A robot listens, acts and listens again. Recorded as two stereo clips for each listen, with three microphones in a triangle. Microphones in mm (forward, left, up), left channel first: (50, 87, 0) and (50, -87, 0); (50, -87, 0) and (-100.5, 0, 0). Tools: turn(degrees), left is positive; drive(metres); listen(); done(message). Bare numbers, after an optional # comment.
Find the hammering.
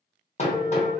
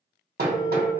# The hammering: 135° left.
turn(135)
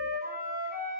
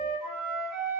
listen()
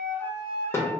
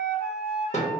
# The hammering is now 15° left.
turn(15)
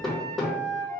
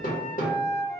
done("Facing the hammering.")